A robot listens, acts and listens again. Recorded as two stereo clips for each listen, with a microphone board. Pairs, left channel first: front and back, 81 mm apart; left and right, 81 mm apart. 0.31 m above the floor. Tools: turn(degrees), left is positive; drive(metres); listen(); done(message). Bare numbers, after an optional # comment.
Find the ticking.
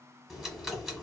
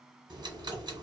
# The ticking: 90° right.
turn(-90)
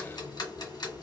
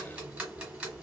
# The ticking is now 15° right.
turn(-15)
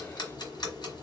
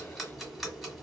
done("Facing the ticking, 1 to 2 m away.")